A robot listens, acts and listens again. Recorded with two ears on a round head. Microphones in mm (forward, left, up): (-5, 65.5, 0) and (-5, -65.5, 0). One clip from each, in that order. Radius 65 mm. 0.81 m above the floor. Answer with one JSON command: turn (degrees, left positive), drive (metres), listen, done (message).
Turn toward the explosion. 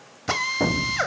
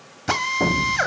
{"turn": 90}
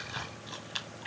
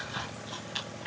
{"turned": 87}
{"done": "Facing where the explosion came from. I can't hear it now."}